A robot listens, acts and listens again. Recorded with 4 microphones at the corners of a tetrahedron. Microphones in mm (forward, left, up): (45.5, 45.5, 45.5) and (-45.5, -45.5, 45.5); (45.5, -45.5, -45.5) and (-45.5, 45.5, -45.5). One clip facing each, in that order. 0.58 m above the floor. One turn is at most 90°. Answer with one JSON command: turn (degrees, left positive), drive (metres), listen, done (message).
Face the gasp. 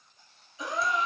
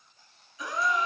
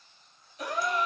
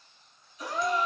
{"turn": -20}
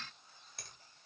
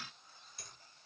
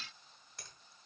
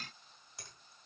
{"done": "Facing where the gasp came from. I can't hear it now."}